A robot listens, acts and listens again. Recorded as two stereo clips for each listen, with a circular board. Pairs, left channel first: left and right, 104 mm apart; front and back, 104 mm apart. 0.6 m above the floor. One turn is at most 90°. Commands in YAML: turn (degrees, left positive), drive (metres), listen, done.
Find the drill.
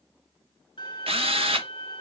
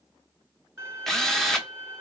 turn: -85
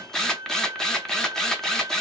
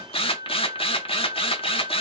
done: "Found it: a drill, straight ahead."